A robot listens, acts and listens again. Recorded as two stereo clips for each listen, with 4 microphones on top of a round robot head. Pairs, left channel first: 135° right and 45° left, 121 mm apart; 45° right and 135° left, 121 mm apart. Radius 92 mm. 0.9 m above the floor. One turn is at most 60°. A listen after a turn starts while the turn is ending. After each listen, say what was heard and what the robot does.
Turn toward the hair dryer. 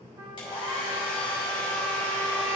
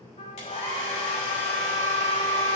The hair dryer: 80° right. Turn 60° right.
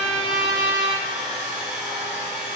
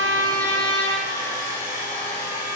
The hair dryer is now 35° right. Turn 35° right.
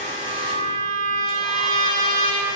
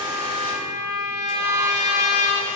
Keep listening.
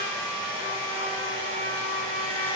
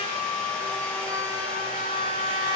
Facing the hair dryer.